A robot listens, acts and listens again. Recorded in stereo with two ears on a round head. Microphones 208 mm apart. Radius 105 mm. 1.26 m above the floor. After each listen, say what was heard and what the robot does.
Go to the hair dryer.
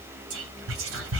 Keep listening.
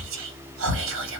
Keep listening.
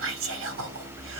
I can't make out a hair dryer to turn to.